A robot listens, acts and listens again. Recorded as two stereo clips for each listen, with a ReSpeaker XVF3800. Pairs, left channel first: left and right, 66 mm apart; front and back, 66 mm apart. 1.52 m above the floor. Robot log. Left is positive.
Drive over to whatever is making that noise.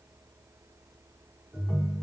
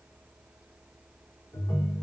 note: The ringtone: 15° left.
cmd yaw +15
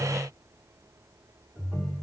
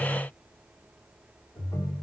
cmd fwd 1.0
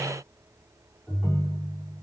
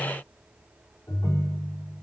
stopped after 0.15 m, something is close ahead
end: Something is in my way. I am facing the ringtone but have not reached it.